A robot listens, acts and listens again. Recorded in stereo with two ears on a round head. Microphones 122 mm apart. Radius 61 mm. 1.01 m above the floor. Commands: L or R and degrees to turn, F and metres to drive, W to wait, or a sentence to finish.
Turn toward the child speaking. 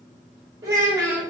R20
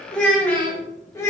L20
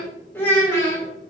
L20
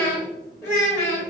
L25
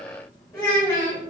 L10
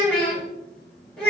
Found it: a child speaking, straight ahead.